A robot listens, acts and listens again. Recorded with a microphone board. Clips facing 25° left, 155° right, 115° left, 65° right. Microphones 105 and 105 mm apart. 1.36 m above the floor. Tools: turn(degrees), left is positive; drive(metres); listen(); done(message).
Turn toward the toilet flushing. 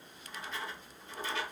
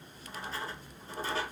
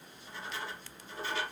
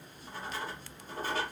listen()
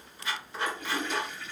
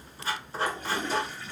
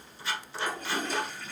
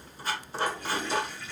turn(degrees=150)
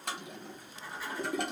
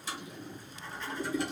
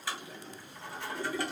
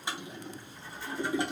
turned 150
done("Facing the toilet flushing.")